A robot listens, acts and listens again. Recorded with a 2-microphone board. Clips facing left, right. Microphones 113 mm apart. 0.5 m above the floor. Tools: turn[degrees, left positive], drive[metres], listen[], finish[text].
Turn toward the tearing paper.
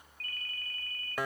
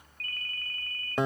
Action: listen[]
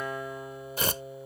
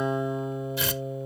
Thought: The tearing paper: about 45° left or 135° left.
Action: turn[45]
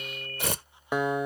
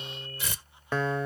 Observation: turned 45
Thought: So it is at 85° left.
Action: turn[85]
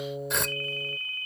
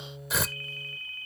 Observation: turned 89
Action: finish[Facing the tearing paper.]